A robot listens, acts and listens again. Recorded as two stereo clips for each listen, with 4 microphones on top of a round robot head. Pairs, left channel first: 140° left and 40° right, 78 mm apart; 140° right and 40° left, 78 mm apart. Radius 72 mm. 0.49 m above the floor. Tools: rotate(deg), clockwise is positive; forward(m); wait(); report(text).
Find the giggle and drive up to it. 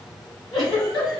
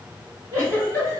rotate(-100)
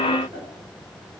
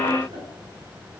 wait()
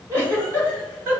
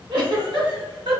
rotate(-20)
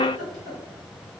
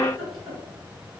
forward(1.0)
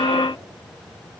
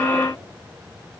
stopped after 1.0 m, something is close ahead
wait()
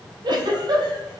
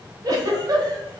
report("I am next to the giggle.")